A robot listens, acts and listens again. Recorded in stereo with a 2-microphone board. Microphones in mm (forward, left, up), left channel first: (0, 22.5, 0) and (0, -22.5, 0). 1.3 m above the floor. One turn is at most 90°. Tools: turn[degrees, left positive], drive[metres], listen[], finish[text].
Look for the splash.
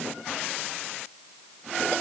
Action: listen[]
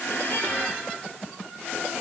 Action: listen[]
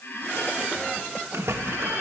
Thought: The splash: about 75° right or 105° right.
Action: turn[-75]
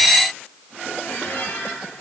Action: listen[]
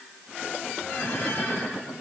Action: finish[I heard a splash, but can't make it out now. It was about straight ahead or 30° right.]